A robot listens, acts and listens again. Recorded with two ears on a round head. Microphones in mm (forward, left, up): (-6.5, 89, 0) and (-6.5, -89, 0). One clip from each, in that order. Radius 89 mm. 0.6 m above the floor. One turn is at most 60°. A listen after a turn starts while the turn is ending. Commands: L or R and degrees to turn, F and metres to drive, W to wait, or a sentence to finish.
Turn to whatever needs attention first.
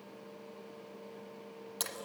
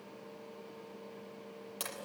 W
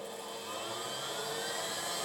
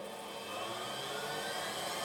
W
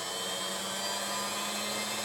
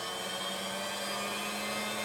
I can't make out anything urgent, only a blender.